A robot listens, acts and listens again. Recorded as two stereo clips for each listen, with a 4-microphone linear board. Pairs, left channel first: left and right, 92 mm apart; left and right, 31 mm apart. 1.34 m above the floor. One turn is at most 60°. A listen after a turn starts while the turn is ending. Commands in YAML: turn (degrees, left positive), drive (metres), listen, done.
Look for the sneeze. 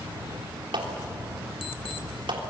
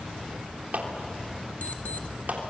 listen: true
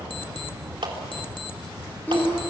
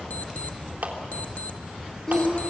turn: 15
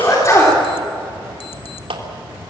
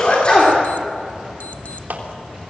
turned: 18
turn: 60
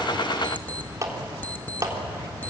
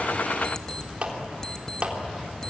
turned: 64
turn: 60
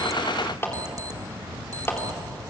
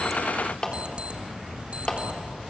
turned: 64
turn: 20
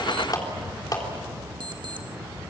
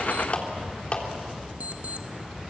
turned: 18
done: "I heard a sneeze from this way, but can't make it out now."